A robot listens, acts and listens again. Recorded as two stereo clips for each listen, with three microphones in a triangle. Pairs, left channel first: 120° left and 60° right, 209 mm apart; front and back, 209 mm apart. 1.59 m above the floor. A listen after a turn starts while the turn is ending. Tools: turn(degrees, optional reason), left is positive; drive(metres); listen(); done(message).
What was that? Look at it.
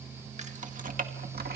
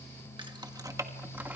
turn(degrees=-100, reason="The keys jangling: 100° right.")
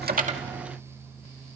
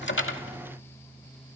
listen()
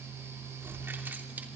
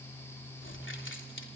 turn(degrees=20, reason="The keys jangling is now 20° left.")
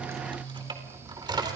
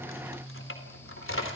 turn(degrees=10, reason="The keys jangling is now 10° left.")
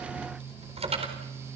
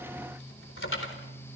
done("Facing the keys jangling, over 4 m away.")